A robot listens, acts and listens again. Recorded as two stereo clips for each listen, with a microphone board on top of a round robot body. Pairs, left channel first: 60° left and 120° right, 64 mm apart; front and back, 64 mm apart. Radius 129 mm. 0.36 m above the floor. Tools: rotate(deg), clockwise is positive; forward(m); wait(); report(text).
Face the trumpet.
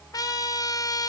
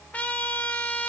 rotate(-65)
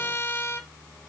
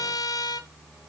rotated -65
rotate(-10)
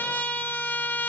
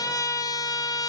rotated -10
report("Facing the trumpet, 1 to 2 m away.")